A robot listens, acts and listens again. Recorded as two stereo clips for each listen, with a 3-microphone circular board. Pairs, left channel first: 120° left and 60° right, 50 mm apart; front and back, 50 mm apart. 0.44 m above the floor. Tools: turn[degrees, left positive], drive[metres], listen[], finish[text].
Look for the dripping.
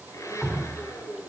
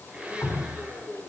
Thought: The dripping: 25° left.
Action: turn[25]
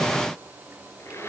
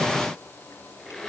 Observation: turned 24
Action: listen[]
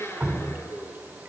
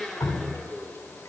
Action: finish[Facing the dripping.]